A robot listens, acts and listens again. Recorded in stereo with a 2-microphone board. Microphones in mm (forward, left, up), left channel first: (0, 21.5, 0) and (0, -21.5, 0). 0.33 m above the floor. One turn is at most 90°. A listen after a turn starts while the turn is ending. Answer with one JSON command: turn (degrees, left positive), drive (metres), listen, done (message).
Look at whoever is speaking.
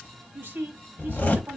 {"turn": -60}
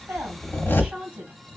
{"turn": -30}
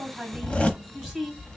{"done": "Found it: a woman speaking, straight ahead."}